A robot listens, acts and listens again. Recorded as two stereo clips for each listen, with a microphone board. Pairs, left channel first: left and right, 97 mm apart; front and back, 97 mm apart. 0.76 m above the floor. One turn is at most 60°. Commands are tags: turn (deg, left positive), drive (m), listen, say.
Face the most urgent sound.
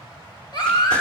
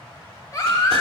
<turn deg="50"/>
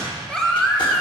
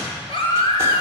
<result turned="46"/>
<say>Found it: a baby crying, straight ahead.</say>